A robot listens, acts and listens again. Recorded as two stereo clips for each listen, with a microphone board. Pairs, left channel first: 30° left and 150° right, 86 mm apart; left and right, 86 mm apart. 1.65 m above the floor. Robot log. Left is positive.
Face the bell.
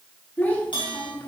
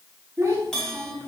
end: Found it: a bell, straight ahead.